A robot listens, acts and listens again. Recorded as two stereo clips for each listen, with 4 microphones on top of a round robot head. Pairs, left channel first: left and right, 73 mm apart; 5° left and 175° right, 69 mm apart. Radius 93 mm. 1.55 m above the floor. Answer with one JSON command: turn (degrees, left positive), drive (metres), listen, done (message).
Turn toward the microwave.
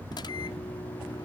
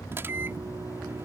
{"turn": 125}
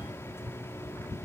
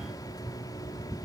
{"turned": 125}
{"listen": true}
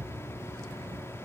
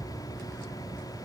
{"listen": true}
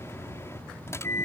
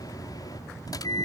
{"turn": 35}
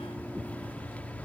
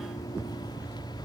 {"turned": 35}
{"turn": 20}
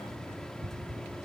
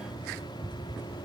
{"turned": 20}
{"listen": true}
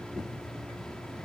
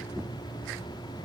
{"listen": true}
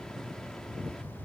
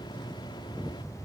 {"done": "I heard a microwave from this way, but can't make it out now."}